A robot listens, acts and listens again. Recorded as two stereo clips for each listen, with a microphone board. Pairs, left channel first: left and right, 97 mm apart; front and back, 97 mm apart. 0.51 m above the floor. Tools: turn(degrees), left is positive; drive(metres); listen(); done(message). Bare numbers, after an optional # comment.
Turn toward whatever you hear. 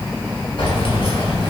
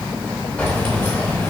# The keys jangling: 65° left.
turn(65)
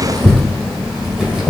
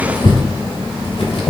# The keys jangling is now 10° right.
turn(-10)
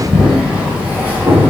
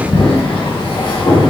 # The keys jangling is now 20° right.
turn(-20)
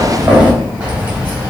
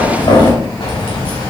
# The keys jangling is now 15° right.
turn(-15)
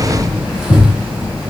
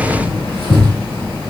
done("Found it: keys jangling, straight ahead.")